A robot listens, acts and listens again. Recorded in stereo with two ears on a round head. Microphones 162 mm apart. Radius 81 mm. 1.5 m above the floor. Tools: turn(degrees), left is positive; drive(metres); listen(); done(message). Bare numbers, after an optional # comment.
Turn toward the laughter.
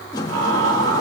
turn(-90)
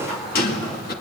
listen()
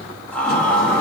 # The laughter is now 10° left.
turn(10)
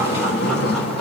listen()
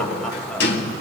done("Found it: laughter, straight ahead.")